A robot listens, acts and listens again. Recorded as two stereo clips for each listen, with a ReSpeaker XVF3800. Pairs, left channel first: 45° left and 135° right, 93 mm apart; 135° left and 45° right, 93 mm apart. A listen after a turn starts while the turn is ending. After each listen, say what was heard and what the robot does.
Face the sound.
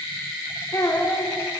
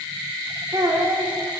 Found it: a child speaking, straight ahead.